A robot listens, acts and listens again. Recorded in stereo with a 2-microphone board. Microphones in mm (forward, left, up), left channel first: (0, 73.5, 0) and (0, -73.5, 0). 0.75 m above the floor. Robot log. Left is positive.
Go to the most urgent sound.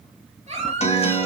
note: The baby crying: about 50° right or 130° right.
cmd yaw -50
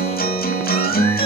cmd idle
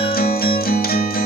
cmd idle
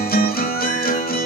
end: I heard a baby crying, but can't make it out now. It was about straight ahead or 80° right. I did not reach it.